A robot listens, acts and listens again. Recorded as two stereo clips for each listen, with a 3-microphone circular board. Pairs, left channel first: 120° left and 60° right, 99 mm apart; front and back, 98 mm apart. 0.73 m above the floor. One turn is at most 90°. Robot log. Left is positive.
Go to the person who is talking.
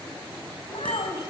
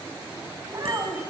note: The child speaking: 125° left.
cmd yaw +90
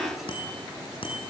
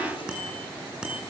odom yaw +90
note: Nothing new. It was at 35° left.
cmd yaw +35
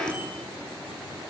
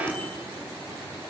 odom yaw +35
cmd idle
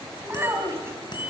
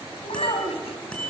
cmd fwd 1.0
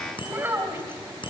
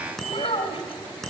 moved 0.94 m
note: The child speaking is now 10° left.
cmd yaw +10
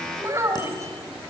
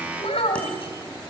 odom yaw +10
cmd fwd 1.0
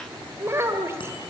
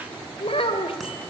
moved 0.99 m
cmd fwd 1.0
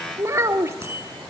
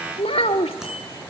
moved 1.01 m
cmd fwd 1.0
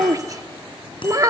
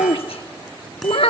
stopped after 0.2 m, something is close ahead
end: I am next to the child speaking.